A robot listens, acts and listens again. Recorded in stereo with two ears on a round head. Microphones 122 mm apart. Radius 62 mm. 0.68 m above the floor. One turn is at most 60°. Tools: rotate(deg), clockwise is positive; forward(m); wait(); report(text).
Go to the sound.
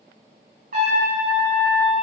rotate(60)
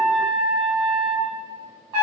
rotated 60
rotate(35)
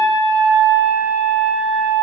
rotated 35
rotate(-10)
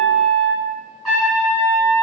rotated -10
forward(1.0)
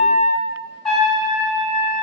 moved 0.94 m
forward(1.0)
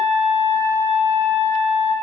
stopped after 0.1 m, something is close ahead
report("I am next to the trumpet.")